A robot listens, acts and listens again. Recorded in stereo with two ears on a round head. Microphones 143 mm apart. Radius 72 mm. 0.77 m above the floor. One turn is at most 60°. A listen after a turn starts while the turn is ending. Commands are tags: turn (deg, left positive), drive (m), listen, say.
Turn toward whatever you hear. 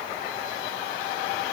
<listen/>
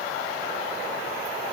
<listen/>
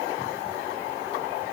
<say>I can't make out anything.</say>